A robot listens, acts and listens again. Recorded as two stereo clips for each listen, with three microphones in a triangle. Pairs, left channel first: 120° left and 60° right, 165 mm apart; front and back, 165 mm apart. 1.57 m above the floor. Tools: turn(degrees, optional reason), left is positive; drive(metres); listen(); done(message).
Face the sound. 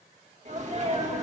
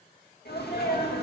turn(degrees=-15, reason="The sneeze: 15° right.")
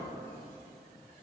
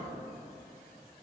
done("Facing where the sneeze came from. I can't hear it now.")